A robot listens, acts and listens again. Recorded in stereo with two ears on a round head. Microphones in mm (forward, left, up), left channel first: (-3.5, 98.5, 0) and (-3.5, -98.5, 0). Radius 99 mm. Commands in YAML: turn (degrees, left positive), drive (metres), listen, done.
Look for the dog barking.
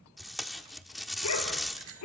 turn: 90
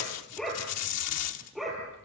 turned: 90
done: "Facing the dog barking, over 4 m away."